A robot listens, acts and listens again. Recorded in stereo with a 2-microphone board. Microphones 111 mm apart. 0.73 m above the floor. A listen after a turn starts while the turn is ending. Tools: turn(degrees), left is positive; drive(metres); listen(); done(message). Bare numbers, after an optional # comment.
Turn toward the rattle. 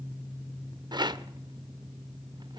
# The rattle: about 40° right or 140° right.
turn(-40)
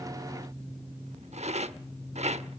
# So it is at 100° right.
turn(-100)
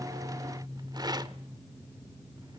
# The rattle is now 35° right.
turn(-35)
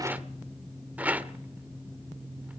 # The rattle is now 15° right.
turn(-15)
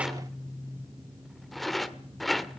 done("Found it: a rattle, straight ahead, under 1 m away.")